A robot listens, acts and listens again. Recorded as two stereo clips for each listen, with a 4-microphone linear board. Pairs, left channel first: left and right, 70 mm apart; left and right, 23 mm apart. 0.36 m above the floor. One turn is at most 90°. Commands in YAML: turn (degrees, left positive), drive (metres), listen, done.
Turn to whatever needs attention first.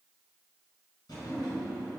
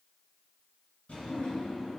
listen: true
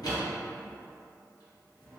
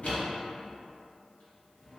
listen: true
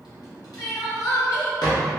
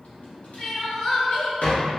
turn: 50
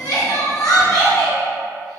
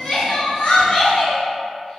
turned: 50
turn: 75
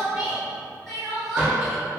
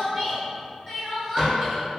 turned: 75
done: "Found it: crying, straight ahead."